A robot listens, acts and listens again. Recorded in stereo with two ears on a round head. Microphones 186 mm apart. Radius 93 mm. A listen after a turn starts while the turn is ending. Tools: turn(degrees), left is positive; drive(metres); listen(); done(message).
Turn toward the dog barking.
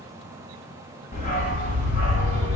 turn(degrees=55)
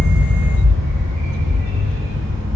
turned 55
turn(degrees=40)
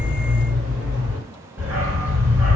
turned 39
turn(degrees=-10)
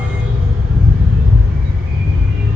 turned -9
done("Facing the dog barking.")